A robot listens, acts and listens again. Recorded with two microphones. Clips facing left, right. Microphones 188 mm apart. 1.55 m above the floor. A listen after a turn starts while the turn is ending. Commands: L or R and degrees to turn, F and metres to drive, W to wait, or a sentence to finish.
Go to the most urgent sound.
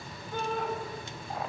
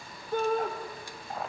R50
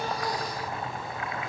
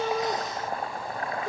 W
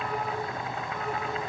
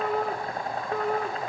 R80
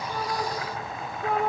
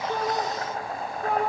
F1.0
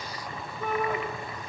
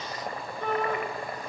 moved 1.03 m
F1.0
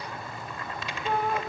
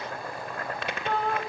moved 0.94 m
L10
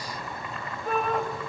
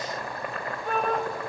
F1.0
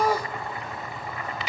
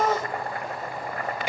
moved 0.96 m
F1.0
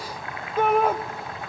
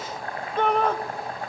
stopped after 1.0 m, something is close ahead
L10
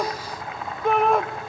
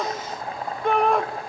Arrived at the shout, straight ahead.